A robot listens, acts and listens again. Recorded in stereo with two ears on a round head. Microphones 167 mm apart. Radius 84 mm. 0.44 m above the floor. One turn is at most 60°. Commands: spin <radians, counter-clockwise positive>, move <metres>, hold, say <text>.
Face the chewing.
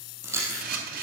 spin -0.52
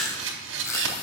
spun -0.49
spin 0.26
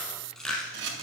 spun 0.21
say Found it: chewing, straight ahead.